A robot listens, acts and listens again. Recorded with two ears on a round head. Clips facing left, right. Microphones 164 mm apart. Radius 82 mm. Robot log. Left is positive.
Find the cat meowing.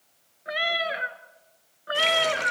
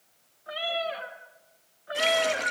note: The cat meowing: about 65° left or 115° left.
cmd yaw +65
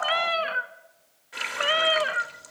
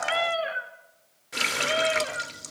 note: So it is at 80° left.
cmd yaw +80
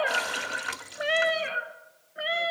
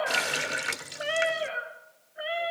note: The cat meowing is now 45° left.
cmd yaw +45
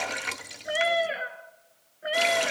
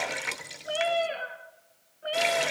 note: The cat meowing is now 15° left.
cmd yaw +15
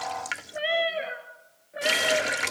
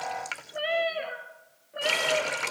end: Facing the cat meowing.